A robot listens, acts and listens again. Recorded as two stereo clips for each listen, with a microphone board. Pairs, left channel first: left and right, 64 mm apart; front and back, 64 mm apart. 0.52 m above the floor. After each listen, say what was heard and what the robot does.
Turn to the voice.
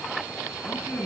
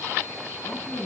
Facing the woman speaking.